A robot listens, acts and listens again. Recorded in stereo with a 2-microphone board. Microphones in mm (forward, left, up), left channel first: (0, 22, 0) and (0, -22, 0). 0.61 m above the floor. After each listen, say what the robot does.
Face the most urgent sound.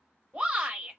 Turn 30° right.
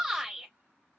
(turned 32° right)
Found it: a shout, straight ahead.